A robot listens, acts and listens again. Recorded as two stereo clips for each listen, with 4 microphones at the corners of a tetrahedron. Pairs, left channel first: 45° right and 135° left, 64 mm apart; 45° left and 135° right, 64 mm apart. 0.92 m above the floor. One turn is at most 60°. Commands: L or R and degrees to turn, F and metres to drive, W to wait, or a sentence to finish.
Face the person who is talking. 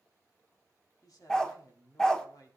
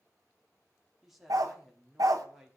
R50
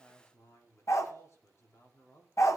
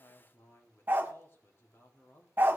Facing the man speaking, 2 to 4 m away.